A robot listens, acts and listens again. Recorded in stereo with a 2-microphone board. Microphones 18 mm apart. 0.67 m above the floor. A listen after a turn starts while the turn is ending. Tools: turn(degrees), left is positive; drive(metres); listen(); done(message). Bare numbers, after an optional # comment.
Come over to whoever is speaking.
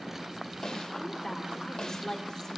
# The woman speaking: about 50° left or 130° left.
turn(50)
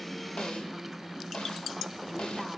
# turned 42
listen()
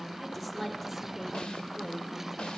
# So it is at 20° left.
turn(20)
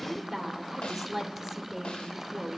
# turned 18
drive(1.0)
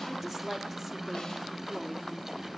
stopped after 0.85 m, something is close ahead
done("Arrived at the woman speaking, straight ahead.")